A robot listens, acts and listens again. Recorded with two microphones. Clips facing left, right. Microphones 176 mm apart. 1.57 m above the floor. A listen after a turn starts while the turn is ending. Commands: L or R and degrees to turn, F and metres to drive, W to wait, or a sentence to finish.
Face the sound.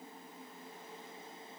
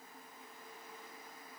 W
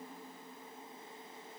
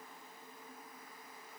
W
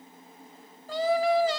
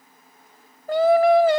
R60
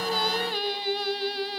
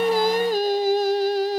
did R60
R50
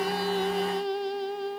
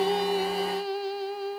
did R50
Facing the singing.